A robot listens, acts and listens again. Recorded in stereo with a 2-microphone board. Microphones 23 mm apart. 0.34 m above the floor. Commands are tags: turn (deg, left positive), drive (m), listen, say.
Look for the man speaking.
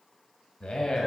<turn deg="50"/>
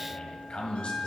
<turn deg="65"/>
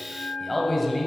<say>Found it: a man speaking, straight ahead, 1 to 2 m away.</say>